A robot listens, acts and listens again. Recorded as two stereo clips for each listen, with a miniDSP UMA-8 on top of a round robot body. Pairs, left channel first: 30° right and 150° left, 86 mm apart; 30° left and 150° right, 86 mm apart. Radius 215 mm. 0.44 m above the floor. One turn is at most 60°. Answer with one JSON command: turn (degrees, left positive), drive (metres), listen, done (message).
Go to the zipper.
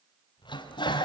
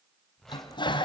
{"turn": -55}
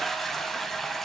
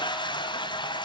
{"listen": true}
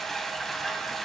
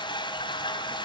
{"listen": true}
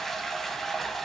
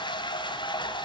{"done": "I heard a zipper from this way, but can't make it out now. I did not reach it."}